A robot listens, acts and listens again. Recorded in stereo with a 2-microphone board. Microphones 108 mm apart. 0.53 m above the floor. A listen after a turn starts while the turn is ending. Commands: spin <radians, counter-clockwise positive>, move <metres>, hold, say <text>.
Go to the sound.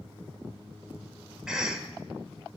spin -0.52
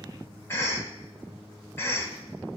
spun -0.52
spin 0.44
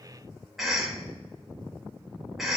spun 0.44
move 1.0
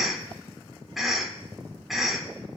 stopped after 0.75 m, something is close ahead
say I am next to the cough.